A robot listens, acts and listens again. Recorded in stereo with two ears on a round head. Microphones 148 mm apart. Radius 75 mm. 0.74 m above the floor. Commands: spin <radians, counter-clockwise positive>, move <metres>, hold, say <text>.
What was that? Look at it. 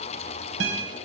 spin -1.57
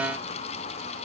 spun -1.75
spin 0.17
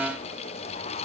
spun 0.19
hold
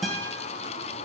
say Facing the guitar, 2 to 4 m away.